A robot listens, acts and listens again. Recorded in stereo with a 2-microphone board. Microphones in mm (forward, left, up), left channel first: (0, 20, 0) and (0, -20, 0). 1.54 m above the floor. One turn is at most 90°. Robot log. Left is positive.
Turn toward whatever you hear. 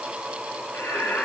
cmd yaw +90
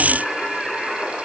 note: So it is at 15° left.
cmd yaw +15
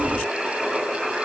end: Found it: singing, straight ahead, over 4 m away.